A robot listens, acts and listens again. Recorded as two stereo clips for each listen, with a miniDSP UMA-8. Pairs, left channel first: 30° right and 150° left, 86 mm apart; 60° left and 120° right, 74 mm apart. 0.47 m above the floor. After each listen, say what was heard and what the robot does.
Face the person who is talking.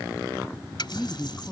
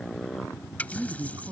The man speaking: 105° right. Turn 105° right.
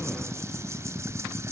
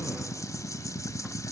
Keep listening.
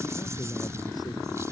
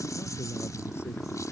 Keep listening.
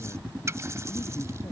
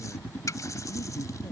Facing where the man speaking came from. I can't hear it now.